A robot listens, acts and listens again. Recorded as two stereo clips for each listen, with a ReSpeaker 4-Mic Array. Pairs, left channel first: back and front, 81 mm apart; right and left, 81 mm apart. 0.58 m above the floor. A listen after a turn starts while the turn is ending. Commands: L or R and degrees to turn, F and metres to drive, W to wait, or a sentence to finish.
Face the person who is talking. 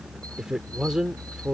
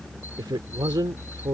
L80
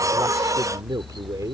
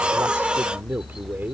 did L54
L30
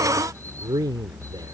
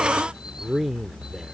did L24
Found it: a man speaking, straight ahead.